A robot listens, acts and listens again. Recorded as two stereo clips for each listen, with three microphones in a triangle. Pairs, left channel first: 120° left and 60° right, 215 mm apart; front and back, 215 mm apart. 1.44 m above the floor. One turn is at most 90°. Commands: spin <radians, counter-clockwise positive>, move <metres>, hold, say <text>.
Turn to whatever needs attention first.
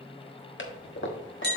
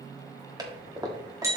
hold
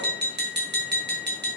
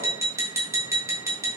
hold
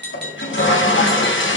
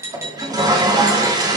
say I can't make out anything urgent, only a toilet flushing and tapping.